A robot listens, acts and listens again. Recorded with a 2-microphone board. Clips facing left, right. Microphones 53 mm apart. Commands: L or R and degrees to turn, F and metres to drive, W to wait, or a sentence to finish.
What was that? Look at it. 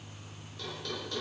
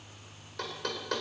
R65
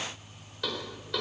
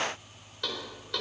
Facing the knocking.